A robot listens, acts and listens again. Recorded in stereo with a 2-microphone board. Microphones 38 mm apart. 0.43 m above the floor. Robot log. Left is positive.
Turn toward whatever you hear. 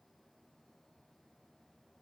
cmd idle
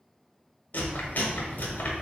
note: The chewing: about 55° left or 125° left.
cmd yaw +55
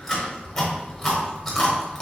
note: So it is at 10° left.
cmd yaw +10
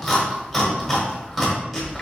end: Found it: chewing, straight ahead, 1 to 2 m away.